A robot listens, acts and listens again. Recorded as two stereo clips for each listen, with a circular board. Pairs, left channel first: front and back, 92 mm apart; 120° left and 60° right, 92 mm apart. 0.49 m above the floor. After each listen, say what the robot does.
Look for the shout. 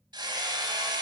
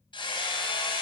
Keep listening.
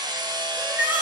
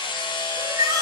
Turn 110° right.
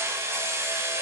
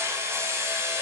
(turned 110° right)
Keep listening.
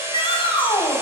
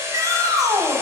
Turn 10° right.
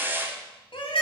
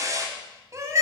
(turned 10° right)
Facing the shout.